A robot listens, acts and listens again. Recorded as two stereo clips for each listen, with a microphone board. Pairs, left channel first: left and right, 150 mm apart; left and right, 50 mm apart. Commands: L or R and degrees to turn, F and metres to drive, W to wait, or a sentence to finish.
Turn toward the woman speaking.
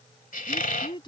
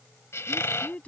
L30
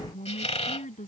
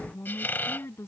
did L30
L125
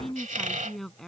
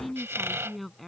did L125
Facing the woman speaking.